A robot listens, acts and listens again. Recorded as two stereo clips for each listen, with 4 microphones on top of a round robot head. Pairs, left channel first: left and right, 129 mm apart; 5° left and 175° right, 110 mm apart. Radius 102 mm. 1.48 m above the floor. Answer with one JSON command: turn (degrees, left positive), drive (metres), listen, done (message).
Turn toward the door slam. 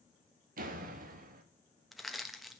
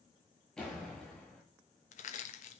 {"turn": -80}
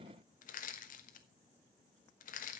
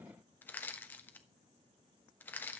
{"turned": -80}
{"done": "I heard a door slam from this way, but can't make it out now."}